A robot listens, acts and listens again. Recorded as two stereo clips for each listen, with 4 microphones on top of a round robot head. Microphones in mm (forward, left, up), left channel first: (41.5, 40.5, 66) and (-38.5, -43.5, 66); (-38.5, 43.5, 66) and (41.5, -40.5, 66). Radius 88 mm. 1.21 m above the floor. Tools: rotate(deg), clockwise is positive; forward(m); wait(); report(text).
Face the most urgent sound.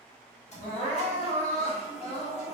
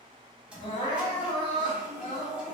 rotate(-85)
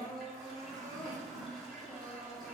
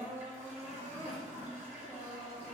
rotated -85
rotate(-10)
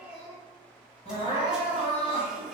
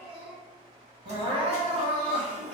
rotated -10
report("Facing the crying.")